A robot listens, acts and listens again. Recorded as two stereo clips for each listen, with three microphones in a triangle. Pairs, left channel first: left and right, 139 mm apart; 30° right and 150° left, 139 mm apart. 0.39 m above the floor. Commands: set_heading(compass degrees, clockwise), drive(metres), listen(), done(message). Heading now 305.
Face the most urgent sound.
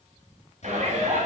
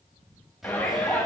set_heading(50)
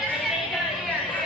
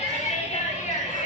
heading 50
done("Facing the shout.")